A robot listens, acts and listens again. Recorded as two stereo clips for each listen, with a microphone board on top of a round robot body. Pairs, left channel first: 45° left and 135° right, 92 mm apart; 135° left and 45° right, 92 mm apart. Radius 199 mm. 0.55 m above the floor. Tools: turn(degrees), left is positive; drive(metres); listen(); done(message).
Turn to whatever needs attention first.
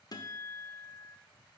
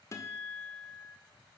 listen()
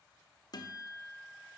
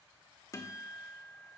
listen()
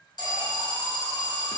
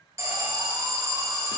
turn(degrees=10)
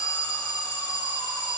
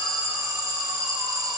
done("Found it: an alarm, straight ahead, 2 to 4 m away.")